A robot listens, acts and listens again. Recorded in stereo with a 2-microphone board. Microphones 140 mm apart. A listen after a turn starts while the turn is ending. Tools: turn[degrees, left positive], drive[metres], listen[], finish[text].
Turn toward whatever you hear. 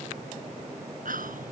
Action: turn[-90]
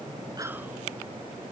Action: listen[]
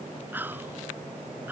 Thought: The whispering is now 15° right.
Action: turn[-15]
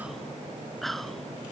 Action: finish[Facing the whispering.]